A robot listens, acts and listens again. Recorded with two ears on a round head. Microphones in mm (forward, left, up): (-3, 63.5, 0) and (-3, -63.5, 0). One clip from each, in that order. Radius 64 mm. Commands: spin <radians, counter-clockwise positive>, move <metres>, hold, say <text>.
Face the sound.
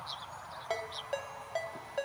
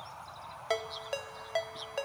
spin -0.87
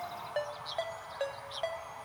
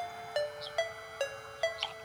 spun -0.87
spin -1.31
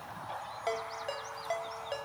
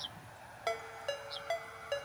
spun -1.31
spin -0.26
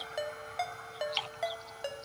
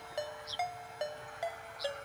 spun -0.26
say Facing the ringtone.